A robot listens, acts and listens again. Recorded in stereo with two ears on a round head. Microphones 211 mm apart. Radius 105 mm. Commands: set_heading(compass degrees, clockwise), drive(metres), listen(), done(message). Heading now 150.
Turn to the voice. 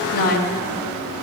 set_heading(105)
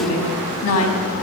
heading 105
set_heading(15)
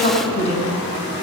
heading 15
set_heading(345)
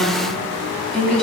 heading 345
done("Found it: a woman speaking, straight ahead.")